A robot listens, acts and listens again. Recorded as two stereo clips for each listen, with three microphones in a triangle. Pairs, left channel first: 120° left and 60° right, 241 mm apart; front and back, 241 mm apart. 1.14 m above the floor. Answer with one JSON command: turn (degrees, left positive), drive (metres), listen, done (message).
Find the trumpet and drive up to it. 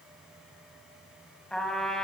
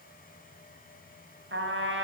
{"turn": -150}
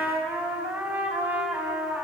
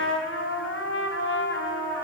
{"turn": 20}
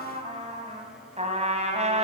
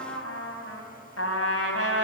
{"drive": 1.0}
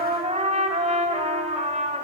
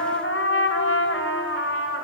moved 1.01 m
{"drive": 1.0}
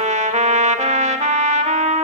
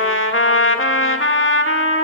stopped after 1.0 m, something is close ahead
{"done": "I am next to the trumpet."}